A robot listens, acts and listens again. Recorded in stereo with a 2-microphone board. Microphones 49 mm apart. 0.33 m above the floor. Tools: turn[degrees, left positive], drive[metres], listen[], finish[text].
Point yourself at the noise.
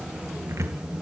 Action: turn[-90]
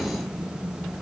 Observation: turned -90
Action: listen[]
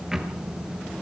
Thought: The cupboard door is now 10° right.
Action: turn[-10]
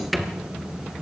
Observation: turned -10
Action: finish[Facing the cupboard door, 1 to 2 m away.]